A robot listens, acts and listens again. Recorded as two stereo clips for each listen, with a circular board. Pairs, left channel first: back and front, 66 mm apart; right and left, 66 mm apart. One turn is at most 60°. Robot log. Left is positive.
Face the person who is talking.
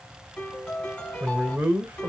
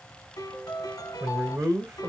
note: The man speaking: 65° left.
cmd yaw +60
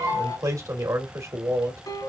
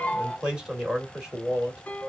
note: The man speaking is now 15° left.
cmd yaw +15
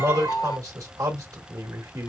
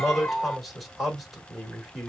end: Found it: a man speaking, straight ahead, 1 to 2 m away.